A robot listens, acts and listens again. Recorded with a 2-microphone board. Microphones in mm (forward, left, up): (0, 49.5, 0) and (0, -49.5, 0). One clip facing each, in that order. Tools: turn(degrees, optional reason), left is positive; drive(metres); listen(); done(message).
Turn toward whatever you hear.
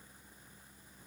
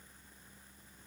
listen()
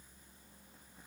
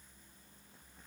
listen()
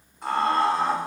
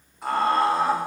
turn(degrees=30)
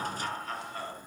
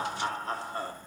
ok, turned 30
turn(degrees=-35, reason="So it is at 35° right.")
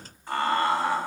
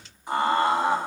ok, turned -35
turn(degrees=-20, reason="The laughter is now 20° right.")
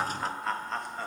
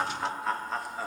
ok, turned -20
done("Found it: laughter, straight ahead.")